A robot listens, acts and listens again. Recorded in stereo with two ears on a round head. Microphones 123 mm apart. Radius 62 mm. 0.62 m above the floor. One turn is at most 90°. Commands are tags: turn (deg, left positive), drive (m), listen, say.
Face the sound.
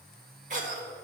<turn deg="-55"/>
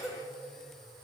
<say>Facing the cough.</say>